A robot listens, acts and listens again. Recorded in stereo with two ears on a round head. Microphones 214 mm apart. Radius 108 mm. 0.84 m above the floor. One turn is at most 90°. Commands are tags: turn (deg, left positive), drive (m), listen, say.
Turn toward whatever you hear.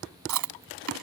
<turn deg="-90"/>
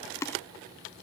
<turn deg="10"/>
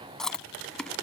<say>Facing the chewing.</say>